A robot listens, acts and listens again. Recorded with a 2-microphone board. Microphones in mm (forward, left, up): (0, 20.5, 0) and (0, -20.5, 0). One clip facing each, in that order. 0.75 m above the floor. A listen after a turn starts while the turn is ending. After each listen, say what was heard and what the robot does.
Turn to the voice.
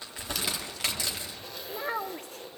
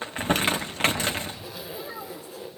The child speaking: about 60° left or 120° left. Turn 60° left.
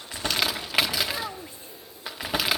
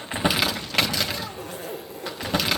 Keep listening.
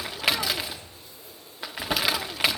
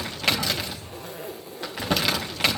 Keep listening.
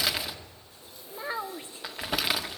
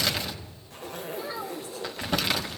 So it is at 35° left. Turn 35° left.
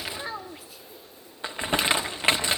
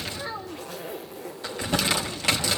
The child speaking is now 10° left. Turn 10° left.
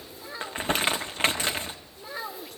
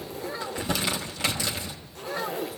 Facing the child speaking.